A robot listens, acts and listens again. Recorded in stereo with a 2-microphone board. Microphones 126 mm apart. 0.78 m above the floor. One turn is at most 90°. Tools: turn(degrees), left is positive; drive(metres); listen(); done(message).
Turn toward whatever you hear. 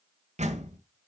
turn(degrees=-65)
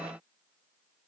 listen()
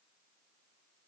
done("I heard a door slam, but can't make it out now. It was about straight ahead or 50° right.")